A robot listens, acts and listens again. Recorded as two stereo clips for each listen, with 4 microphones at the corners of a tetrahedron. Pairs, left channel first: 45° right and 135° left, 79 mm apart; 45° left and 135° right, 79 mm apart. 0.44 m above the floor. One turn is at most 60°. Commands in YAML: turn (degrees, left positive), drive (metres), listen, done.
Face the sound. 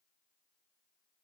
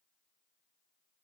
listen: true
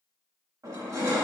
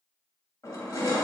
turn: 60
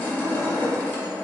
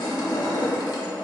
turn: 25
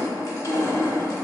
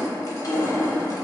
done: "Facing the crushing."